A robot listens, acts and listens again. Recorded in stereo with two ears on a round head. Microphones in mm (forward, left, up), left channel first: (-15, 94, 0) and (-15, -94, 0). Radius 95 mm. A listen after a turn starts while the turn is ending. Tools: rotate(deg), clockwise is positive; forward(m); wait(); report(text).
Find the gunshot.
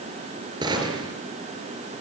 rotate(20)
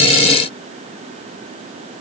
wait()
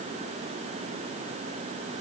report("I heard a gunshot, but can't make it out now. It was about straight ahead or 140° right.")